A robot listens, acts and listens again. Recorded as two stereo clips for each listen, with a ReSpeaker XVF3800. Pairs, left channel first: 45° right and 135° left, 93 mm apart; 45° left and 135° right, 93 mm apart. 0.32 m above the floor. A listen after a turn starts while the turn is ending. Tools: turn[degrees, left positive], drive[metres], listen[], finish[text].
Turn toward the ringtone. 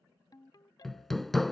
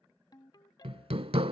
Action: finish[Found it: a ringtone, straight ahead.]